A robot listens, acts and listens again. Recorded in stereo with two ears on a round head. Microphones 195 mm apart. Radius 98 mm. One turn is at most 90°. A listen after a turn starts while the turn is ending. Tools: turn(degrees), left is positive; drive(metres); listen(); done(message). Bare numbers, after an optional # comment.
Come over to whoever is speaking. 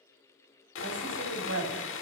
# The woman speaking: about 70° right or 110° right.
turn(-70)
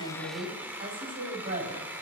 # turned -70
# So it is at 40° right.
turn(-40)
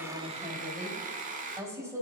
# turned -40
# The woman speaking is now 10° right.
turn(-10)
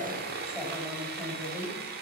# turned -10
drive(1.0)
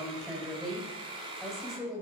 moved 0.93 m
drive(1.0)
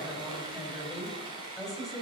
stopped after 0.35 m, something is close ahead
done("Blocked. The woman speaking is further on, straight ahead.")